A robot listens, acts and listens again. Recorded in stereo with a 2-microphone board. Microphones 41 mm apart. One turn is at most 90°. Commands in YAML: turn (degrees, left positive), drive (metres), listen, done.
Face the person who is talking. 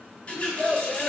turn: 20
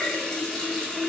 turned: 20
listen: true
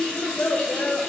turn: 90
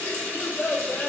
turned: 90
turn: 40
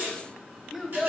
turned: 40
done: "Facing the child speaking."